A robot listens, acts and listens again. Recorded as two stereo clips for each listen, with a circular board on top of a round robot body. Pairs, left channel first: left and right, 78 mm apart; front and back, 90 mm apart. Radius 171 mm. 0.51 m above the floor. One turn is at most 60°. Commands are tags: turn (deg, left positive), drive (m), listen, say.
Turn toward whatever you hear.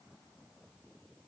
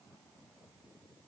<listen/>
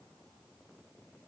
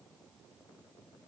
<listen/>
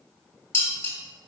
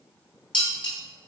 <turn deg="35"/>
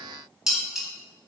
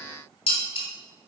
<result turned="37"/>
<say>Found it: dishes clattering, straight ahead.</say>